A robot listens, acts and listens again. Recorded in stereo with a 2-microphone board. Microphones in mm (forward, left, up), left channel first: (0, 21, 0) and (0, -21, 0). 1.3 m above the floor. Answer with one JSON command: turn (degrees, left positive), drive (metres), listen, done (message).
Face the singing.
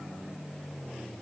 {"listen": true}
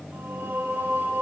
{"turn": -90}
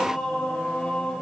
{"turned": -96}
{"turn": 25}
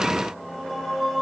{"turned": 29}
{"done": "Facing the singing, over 4 m away."}